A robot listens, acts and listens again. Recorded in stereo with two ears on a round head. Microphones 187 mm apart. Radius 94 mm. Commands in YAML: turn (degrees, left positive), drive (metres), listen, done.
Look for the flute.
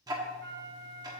turn: -50
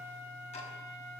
listen: true
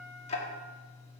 listen: true
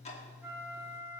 turn: -15
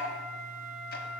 done: "Found it: a flute, straight ahead, under 1 m away."